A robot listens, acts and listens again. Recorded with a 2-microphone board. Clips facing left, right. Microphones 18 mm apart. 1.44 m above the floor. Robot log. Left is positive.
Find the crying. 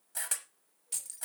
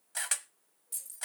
cmd idle
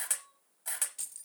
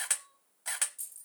note: The crying: about 20° right or 160° right.
cmd yaw -20
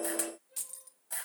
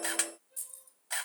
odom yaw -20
end: Found it: crying, straight ahead, 1 to 2 m away.